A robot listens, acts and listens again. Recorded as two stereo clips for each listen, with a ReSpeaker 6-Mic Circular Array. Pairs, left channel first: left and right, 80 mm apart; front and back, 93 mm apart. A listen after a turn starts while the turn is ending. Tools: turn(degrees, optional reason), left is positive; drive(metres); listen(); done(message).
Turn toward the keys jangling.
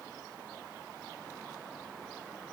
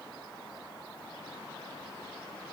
listen()
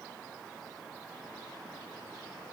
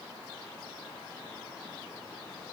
listen()
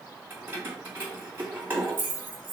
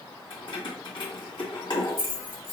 turn(degrees=-25, reason="The keys jangling: 25° right.")
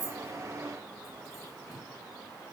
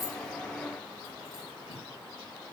listen()
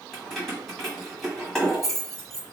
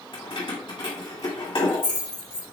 done("Facing the keys jangling, 1 to 2 m away.")